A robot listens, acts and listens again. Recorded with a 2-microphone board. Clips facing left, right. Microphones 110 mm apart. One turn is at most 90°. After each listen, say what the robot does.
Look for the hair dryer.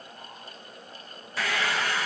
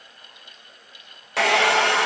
Turn 75° right.
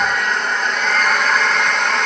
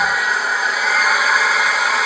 Found it: a hair dryer, straight ahead.